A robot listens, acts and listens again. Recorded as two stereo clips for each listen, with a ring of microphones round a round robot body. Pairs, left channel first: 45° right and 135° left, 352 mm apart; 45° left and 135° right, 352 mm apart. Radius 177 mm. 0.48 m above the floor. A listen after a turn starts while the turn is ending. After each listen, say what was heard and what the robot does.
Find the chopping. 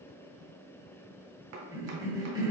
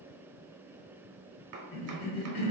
The chopping: straight behind. Turn 180° left.
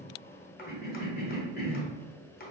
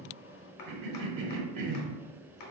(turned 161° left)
The chopping is now 20° left. Turn 20° left.
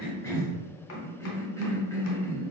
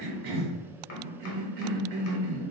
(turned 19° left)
Keep listening.
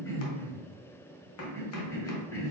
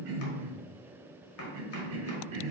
Keep listening.
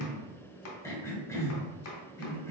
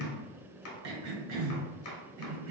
Facing the chopping.